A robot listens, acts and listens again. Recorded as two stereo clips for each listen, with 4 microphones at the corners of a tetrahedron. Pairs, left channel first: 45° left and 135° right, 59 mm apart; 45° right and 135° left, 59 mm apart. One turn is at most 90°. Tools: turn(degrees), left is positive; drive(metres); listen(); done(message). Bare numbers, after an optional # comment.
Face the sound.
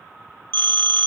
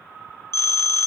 done("Facing the phone ringing, 1 to 2 m away.")